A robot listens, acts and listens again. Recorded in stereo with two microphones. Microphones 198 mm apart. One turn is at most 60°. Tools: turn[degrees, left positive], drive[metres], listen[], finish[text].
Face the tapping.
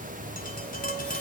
Thought: The tapping: about 45° left or 135° left.
Action: turn[45]
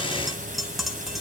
Action: finish[Found it: tapping, straight ahead, 2 to 4 m away.]